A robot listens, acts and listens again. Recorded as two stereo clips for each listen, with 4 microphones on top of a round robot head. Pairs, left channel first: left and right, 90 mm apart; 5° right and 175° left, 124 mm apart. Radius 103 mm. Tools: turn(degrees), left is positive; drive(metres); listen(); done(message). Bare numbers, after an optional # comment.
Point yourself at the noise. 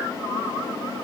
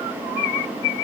listen()
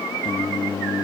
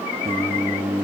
# The singing: 115° left.
turn(115)
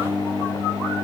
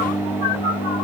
done("Facing the singing.")